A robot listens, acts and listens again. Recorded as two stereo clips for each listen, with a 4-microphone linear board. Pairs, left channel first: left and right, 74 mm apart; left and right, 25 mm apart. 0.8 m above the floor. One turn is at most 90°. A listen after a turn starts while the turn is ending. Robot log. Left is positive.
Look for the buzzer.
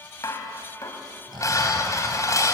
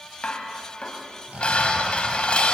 cmd idle
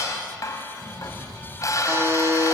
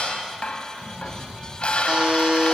note: The buzzer: about 35° right or 145° right.
cmd yaw -35
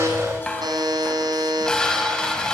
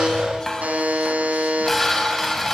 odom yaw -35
note: So it is at 110° right.
cmd yaw -90
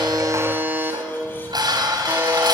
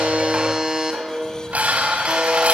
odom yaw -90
note: The buzzer is now 30° right.
cmd yaw -30
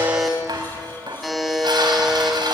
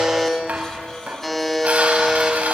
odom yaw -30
end: Facing the buzzer, 2 to 4 m away.